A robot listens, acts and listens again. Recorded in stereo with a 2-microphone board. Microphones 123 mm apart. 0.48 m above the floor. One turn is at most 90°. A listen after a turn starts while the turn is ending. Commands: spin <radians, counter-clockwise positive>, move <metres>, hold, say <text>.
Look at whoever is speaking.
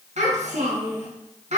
spin -1.22
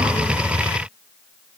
hold
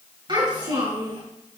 spin -0.70
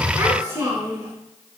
spin -0.35
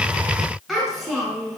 say Facing the child speaking, over 4 m away.